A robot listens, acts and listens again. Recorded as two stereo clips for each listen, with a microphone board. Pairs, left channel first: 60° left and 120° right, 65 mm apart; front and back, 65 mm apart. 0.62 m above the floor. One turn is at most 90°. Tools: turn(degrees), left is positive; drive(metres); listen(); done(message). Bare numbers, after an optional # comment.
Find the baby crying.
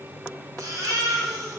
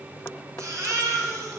# The baby crying: 145° right.
turn(-90)
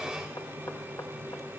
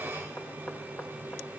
# Nothing new. It was at 55° right.
turn(-55)
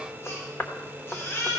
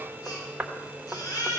# The baby crying is now 10° left.
turn(10)
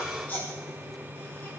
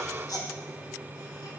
done("Found it: a baby crying, straight ahead, 2 to 4 m away.")